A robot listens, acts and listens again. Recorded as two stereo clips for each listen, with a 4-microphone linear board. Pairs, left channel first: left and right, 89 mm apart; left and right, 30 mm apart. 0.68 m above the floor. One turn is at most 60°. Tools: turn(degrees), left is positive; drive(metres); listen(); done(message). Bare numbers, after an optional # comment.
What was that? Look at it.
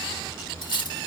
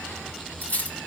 # The cutlery clinking: about 60° left or 120° left.
turn(60)
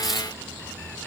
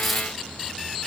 done("Found it: cutlery clinking, straight ahead, 1 to 2 m away.")